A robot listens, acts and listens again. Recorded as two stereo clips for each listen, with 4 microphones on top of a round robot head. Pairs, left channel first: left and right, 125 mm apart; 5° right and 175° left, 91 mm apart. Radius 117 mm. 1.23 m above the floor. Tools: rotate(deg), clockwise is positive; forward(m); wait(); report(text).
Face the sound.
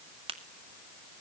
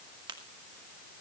rotate(135)
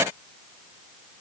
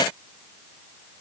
report("Facing where the crack came from. I can't hear it now.")